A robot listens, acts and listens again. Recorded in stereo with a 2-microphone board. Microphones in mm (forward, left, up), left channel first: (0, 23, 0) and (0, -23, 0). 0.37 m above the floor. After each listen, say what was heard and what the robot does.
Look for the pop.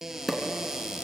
Turn 30° left.
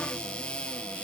Keep listening.
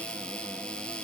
I heard a pop, but can't make it out now. It was about 30° right or 150° left.